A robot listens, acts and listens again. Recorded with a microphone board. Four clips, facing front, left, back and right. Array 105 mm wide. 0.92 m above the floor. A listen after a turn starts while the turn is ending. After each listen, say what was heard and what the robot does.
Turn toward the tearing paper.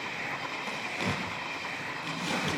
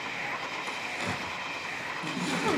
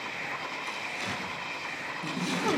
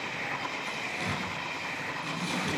The tearing paper: 10° left. Turn 10° left.
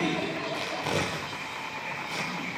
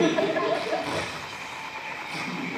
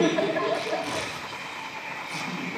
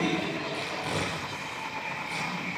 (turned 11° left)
Facing the tearing paper.